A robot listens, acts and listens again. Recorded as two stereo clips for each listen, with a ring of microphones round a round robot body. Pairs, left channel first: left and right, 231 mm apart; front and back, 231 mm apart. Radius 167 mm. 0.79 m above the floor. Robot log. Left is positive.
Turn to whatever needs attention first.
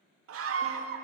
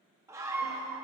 note: The scream: 100° right.
cmd yaw -100
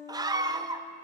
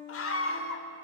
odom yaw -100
note: The scream is now 15° right.
cmd yaw -15
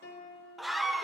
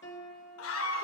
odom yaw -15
end: Facing the scream.